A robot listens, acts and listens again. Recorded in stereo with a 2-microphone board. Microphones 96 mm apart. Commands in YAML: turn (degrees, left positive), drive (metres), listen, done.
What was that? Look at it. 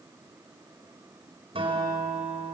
turn: -75
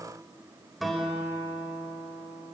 done: "Found it: a guitar, straight ahead."